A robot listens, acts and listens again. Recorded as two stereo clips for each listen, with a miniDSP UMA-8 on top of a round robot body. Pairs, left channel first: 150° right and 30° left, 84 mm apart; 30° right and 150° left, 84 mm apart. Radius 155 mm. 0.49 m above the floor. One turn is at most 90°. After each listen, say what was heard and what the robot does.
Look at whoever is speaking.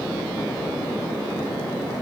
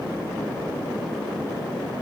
Keep listening.
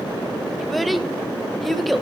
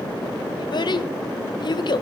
The child speaking: 60° right. Turn 60° right.
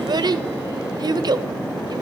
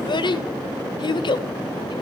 Found it: a child speaking, straight ahead, 1 to 2 m away.